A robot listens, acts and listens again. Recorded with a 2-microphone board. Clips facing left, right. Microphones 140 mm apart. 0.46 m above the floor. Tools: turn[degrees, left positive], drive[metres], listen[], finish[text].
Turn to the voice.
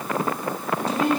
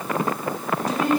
Thought: The woman speaking: about 30° left or 150° left.
Action: turn[30]
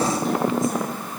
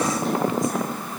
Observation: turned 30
Action: listen[]
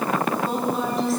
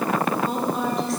Action: finish[Facing the woman speaking.]